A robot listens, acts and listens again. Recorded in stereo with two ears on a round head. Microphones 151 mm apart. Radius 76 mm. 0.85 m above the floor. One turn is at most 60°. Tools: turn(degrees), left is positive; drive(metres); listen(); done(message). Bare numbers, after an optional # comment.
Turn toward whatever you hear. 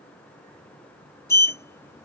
# The sliding door: about 15° left or 165° left.
turn(15)
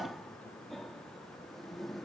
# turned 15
done("Facing the sliding door.")